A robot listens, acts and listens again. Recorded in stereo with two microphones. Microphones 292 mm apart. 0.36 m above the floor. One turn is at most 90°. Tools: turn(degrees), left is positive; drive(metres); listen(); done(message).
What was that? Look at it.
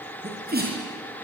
turn(degrees=-35)
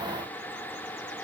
listen()
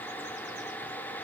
done("I heard a sneeze, but can't make it out now. It was about straight ahead or 110° right.")